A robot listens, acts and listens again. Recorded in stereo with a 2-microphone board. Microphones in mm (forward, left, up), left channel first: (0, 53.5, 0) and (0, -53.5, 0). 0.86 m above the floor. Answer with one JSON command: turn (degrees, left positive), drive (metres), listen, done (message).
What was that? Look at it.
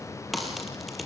{"turn": 30}
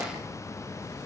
{"listen": true}
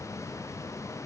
{"done": "I heard a crack, but can't make it out now. It was about 30° right or 150° left."}